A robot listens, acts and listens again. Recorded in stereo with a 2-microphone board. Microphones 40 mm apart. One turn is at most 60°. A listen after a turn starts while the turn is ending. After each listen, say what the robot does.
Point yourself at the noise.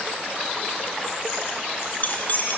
Turn 45° left.
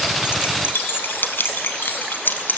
Turn 60° left.
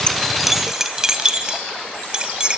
Turn 20° right.
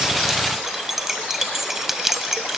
Found it: keys jangling, straight ahead, 1 to 2 m away.